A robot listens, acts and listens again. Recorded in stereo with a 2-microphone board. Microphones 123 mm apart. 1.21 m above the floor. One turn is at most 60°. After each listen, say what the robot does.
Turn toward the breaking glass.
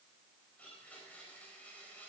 Keep listening.
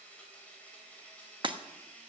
Turn 40° right.
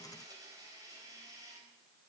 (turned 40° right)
Keep listening.
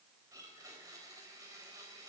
I heard breaking glass, but can't make it out now. It was about straight ahead or 100° right.